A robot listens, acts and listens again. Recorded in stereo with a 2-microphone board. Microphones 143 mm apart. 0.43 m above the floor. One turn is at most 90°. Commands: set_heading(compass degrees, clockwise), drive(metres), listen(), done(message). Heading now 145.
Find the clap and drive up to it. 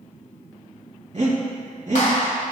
set_heading(80)
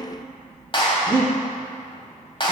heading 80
set_heading(40)
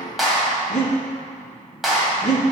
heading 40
drive(1.0)
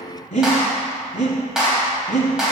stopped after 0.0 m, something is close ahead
done("Blocked. The clap is further on, straight ahead.")